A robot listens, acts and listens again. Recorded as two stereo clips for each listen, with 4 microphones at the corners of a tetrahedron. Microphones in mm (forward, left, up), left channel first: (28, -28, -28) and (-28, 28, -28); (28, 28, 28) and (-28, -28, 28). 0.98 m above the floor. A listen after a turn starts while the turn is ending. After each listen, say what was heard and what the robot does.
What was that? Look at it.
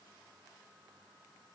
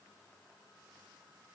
Keep listening.
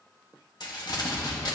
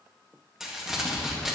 The crumpling: 50° right. Turn 50° right.
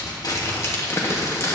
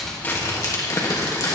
Facing the crumpling, 1 to 2 m away.